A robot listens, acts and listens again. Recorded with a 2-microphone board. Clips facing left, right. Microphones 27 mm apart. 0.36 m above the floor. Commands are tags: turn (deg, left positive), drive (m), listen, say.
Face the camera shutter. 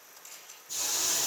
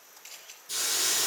<turn deg="-45"/>
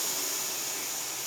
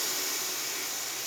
<listen/>
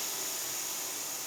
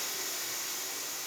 <listen/>
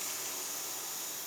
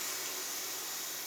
<say>I heard a camera shutter, but can't make it out now. It was about straight ahead or 90° right.</say>